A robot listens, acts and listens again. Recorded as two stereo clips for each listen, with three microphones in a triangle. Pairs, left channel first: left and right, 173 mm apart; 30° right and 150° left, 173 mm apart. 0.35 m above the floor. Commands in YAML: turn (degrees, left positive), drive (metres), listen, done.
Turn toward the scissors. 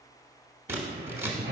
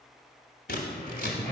turn: -15
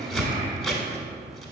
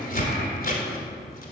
done: "Found it: scissors, straight ahead."